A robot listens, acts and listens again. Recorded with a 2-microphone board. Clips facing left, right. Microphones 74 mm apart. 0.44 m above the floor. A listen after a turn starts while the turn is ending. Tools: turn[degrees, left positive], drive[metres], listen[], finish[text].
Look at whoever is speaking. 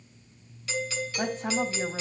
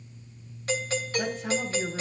Thought: The woman speaking: about 35° left or 145° left.
Action: turn[35]
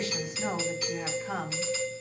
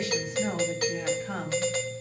Thought: So it is at 10° left.
Action: turn[10]
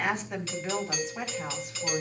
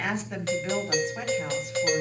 Action: finish[Found it: a woman speaking, straight ahead.]